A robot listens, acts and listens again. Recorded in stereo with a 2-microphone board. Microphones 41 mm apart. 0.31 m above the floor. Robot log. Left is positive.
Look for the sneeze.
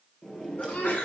note: The sneeze: about 50° left or 130° left.
cmd yaw +50
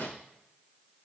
cmd idle
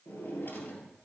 end: I heard a sneeze, but can't make it out now. It was about straight ahead or 80° left.